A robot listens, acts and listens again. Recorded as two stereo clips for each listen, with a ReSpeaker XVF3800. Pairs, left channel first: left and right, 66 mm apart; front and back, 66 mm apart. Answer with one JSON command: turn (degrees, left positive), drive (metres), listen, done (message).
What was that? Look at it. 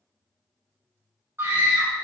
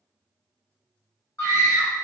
{"turn": -40}
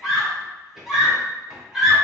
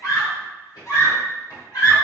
{"done": "Facing the scream."}